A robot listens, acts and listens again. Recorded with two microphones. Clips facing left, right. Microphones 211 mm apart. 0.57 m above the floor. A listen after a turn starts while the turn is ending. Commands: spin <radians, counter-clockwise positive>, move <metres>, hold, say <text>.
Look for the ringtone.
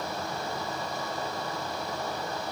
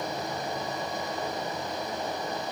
hold
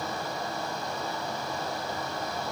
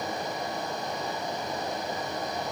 hold
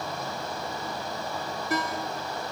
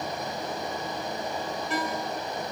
spin 0.70
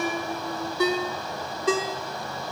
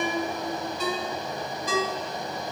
spin 1.57
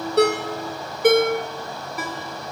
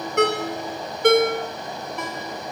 say Found it: a ringtone, straight ahead, under 1 m away.